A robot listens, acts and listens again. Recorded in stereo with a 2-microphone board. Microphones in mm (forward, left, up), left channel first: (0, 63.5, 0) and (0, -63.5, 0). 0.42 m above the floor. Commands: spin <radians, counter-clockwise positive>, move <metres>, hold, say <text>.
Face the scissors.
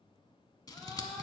spin 0.52
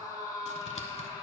hold
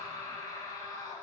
hold
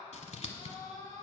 spin 2.09
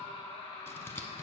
spin 0.35
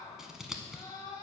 say Facing the scissors, under 1 m away.